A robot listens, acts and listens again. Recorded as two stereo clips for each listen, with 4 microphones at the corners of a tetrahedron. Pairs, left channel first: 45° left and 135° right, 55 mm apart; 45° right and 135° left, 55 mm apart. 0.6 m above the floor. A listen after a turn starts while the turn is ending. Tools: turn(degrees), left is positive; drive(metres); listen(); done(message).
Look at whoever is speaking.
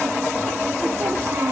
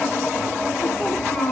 turn(degrees=-110)
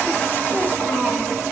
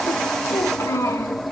turn(degrees=-35)
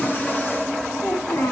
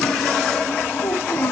turn(degrees=10)
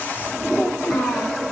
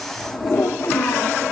done("Found it: a child speaking, straight ahead, over 4 m away.")